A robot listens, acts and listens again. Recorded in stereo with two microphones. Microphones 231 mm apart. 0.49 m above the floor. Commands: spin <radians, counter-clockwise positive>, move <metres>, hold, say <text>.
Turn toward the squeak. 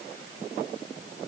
hold
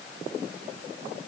hold
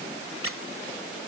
spin -1.22
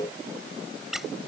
say Found it: a squeak, straight ahead.